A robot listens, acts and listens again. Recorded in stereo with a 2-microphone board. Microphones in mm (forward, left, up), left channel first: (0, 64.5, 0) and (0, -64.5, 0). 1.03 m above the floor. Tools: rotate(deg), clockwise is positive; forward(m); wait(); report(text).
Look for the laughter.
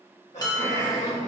rotate(-70)
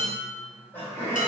rotate(-20)
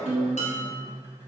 report("Found it: laughter, straight ahead.")